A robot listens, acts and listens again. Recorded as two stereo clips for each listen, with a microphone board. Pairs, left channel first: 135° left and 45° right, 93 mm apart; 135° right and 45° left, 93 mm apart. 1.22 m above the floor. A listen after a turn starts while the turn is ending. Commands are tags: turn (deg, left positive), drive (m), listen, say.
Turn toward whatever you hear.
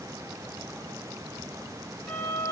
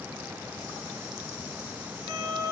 <turn deg="60"/>
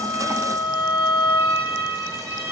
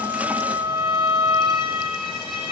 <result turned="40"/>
<turn deg="20"/>
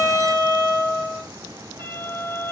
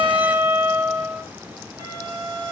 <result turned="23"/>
<say>Facing the violin, 2 to 4 m away.</say>